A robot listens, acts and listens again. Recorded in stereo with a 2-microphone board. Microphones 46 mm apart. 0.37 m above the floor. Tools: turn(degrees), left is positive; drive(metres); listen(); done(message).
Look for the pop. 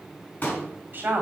turn(degrees=40)
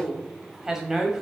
listen()
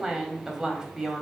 done("I heard a pop, but can't make it out now. It was about straight ahead or 100° left.")